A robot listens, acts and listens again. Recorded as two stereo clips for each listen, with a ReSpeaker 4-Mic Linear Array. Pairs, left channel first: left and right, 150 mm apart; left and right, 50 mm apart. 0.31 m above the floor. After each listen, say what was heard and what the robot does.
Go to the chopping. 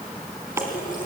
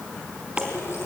The chopping: about 20° right or 160° right. Turn 20° right.
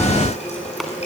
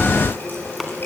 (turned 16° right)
Keep listening.
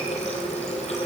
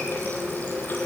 Keep listening.
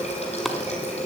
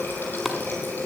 Drive 1.0 m forward.
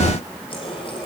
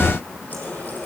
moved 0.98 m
Keep listening.
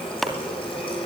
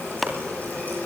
Drive 1.0 m forward.
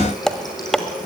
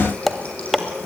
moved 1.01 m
Drive 1.0 m forward.
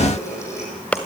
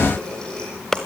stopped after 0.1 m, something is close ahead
The chopping is now 15° left. Turn 15° left.
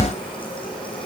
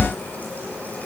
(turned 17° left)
Keep listening.
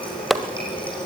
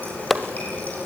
Arrived at the chopping, straight ahead.